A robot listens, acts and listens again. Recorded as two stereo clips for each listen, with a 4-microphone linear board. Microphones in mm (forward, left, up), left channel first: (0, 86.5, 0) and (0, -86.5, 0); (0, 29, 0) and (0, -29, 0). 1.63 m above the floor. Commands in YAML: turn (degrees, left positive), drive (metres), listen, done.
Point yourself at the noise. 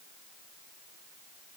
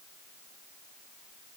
listen: true
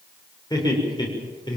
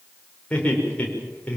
turn: 25
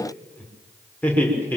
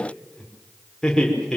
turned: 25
turn: 30
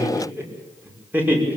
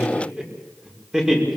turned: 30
turn: -10
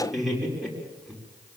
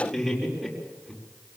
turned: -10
done: "Found it: laughter, straight ahead."